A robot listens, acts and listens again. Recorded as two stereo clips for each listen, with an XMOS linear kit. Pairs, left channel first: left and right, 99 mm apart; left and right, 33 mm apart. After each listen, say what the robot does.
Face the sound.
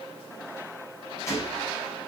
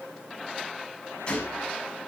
Turn 30° left.
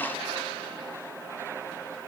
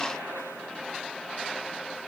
Keep listening.
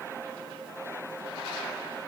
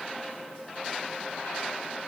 I heard a gunshot, but can't make it out now. It was about straight ahead or 120° left.